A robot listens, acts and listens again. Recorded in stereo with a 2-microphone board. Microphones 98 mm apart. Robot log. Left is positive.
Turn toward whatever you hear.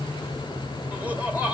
note: The laughter: about 15° right or 165° right.
cmd yaw -15
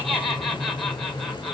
end: Found it: laughter, straight ahead, 1 to 2 m away.